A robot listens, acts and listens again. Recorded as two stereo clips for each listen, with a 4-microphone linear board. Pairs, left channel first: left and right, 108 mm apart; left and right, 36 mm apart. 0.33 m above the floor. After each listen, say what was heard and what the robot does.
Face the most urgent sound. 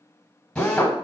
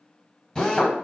Keep listening.
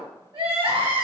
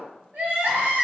The crying: about 60° right or 120° right. Turn 60° right.
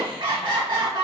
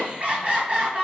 So it is at 50° right. Turn 50° right.
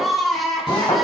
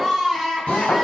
Facing the crying.